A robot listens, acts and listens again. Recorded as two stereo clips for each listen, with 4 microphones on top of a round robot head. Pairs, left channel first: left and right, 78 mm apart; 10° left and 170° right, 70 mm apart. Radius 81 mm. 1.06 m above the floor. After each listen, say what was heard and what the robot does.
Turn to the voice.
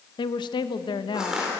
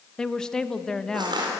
The woman speaking: 90° left. Turn 90° left.
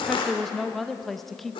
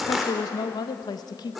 Facing the woman speaking.